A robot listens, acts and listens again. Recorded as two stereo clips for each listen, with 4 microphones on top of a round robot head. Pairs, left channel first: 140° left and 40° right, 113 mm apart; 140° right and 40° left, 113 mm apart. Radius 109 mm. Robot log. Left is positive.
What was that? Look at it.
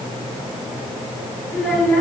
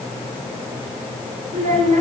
note: The child speaking: 60° left.
cmd yaw +60
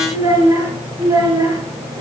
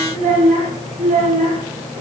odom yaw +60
note: The child speaking is now 20° left.
cmd yaw +20
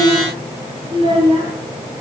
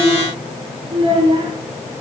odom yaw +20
end: Found it: a child speaking, straight ahead.